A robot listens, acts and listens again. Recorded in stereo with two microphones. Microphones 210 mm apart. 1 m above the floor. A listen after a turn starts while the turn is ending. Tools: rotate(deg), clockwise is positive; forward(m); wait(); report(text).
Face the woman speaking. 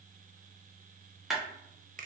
wait()
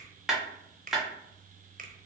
wait()
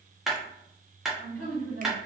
rotate(30)
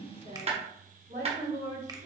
rotate(135)
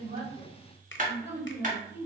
rotate(30)
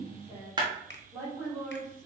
rotate(10)
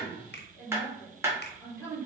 report("Facing the woman speaking, 2 to 4 m away.")